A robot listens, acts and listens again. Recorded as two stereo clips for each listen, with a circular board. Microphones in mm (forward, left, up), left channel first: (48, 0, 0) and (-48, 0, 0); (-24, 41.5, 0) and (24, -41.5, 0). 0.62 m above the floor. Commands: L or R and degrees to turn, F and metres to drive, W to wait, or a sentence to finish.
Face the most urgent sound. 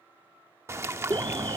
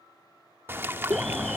R155
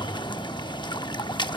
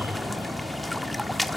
Facing the alarm, 2 to 4 m away.